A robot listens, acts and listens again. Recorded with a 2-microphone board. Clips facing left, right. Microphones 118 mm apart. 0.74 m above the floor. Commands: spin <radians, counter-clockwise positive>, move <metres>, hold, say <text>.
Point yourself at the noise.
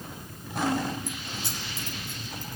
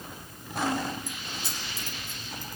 spin 1.05
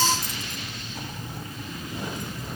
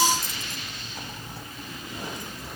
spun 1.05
hold
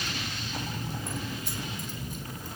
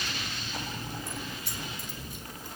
hold
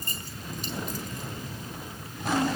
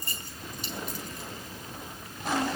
spin 0.79
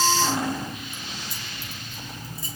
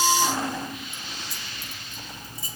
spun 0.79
say Found it: keys jangling, straight ahead, over 4 m away.